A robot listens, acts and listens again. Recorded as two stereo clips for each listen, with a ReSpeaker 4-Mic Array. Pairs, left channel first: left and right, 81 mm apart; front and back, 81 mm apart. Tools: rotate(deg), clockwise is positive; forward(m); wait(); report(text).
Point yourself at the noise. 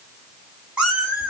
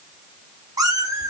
rotate(155)
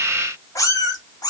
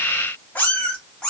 rotate(-80)
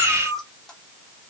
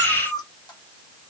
report("Facing the cat meowing.")